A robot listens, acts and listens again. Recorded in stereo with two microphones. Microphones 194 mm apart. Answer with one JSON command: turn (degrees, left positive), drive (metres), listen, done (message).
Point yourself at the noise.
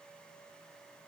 {"listen": true}
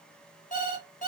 {"turn": 45}
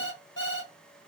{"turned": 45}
{"turn": 90}
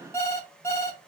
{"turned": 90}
{"turn": 15}
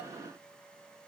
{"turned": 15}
{"listen": true}
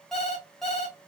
{"done": "Facing the alarm clock."}